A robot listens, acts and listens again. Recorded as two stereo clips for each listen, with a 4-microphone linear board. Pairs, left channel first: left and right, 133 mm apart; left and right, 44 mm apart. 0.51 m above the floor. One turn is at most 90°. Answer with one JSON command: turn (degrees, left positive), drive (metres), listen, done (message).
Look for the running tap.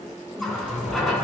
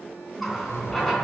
{"turn": 30}
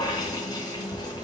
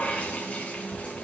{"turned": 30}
{"turn": 90}
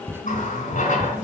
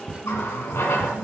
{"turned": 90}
{"turn": 90}
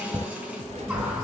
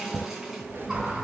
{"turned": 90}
{"turn": -10}
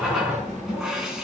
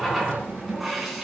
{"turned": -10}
{"done": "Found it: a running tap, straight ahead, 2 to 4 m away."}